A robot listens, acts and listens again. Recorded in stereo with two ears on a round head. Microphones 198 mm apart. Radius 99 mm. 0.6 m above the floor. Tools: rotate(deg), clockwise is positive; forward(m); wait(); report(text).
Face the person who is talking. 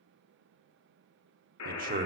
rotate(40)
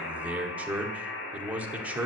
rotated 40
rotate(10)
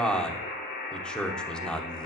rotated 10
report("Facing the man speaking, 1 to 2 m away.")